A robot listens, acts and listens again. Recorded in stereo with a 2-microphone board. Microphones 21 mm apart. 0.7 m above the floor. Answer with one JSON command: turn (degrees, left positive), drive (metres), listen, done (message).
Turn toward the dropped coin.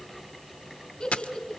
{"turn": 70}
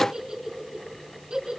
{"listen": true}
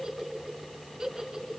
{"done": "I heard a dropped coin, but can't make it out now. It was about straight ahead or 40° left."}